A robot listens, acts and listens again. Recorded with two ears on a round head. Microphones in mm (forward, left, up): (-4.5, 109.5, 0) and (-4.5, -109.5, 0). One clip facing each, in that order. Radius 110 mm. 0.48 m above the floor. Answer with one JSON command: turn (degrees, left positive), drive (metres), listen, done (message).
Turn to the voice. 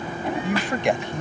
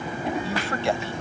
{"turn": 15}
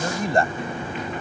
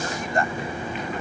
{"turn": 150}
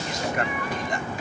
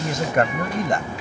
{"turn": -50}
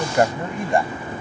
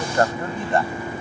{"turn": 15}
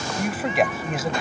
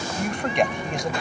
{"done": "Facing the man speaking."}